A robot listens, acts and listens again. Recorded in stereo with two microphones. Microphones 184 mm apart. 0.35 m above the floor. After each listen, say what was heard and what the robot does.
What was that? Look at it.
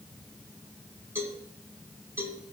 Turn 30° right.
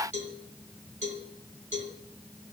So it is at 135° right. Turn 135° right.
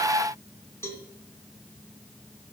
The cowbell is now 15° left. Turn 15° left.
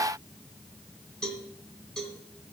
Facing the cowbell.